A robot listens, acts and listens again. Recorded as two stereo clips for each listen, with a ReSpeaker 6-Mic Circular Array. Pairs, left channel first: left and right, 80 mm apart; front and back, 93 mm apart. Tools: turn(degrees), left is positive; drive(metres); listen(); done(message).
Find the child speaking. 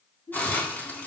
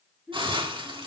turn(degrees=95)
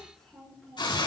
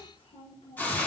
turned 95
done("Found it: a child speaking, straight ahead, over 4 m away.")